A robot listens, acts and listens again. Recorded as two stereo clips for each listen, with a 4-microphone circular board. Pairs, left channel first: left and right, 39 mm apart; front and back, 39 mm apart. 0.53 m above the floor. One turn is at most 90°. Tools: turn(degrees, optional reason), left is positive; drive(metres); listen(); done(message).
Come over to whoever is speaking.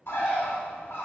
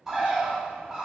listen()
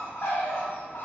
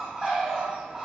listen()
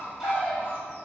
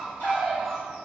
done("I can't make out anyone speaking, only a bird.")